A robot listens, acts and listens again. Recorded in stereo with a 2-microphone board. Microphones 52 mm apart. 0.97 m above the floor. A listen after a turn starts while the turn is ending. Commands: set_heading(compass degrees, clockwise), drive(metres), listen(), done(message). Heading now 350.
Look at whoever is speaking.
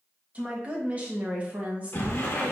set_heading(15)
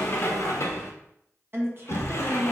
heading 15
set_heading(140)
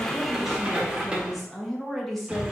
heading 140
done("Found it: a woman speaking, straight ahead, 1 to 2 m away.")